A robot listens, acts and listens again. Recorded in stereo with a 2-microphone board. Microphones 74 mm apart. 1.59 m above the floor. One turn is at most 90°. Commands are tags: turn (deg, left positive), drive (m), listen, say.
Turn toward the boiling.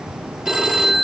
<listen/>
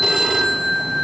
<listen/>
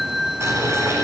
<turn deg="-40"/>
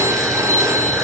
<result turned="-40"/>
<listen/>
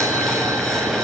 <say>Found it: boiling, straight ahead.</say>